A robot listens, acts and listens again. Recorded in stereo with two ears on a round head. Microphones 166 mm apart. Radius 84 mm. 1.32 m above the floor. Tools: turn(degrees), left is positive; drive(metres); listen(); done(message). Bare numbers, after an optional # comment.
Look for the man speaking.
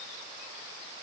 listen()
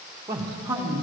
turn(-30)
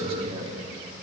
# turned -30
# So it is at 150° right.
turn(-150)
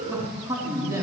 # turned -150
# The man speaking is now 20° right.
turn(-20)
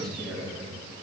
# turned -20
done("Found it: a man speaking, straight ahead, 2 to 4 m away.")